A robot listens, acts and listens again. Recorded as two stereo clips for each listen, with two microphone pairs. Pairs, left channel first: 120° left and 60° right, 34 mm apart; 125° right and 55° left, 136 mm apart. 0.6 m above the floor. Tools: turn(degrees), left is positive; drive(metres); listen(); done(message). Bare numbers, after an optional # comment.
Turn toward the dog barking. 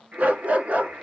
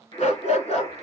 # The dog barking: 95° right.
turn(-95)
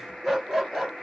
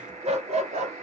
# The dog barking is now 20° left.
turn(20)
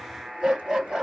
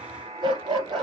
done("Found it: a dog barking, straight ahead, 2 to 4 m away.")